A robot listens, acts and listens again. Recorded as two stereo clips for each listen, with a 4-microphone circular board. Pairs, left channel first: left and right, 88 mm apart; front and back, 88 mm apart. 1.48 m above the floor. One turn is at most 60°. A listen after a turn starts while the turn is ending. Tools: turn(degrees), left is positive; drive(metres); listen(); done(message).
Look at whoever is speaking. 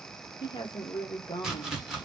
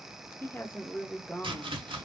turn(degrees=60)
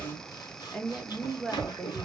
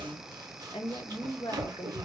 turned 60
turn(degrees=10)
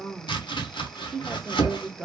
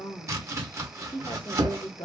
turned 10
done("Found it: a woman speaking, straight ahead, under 1 m away.")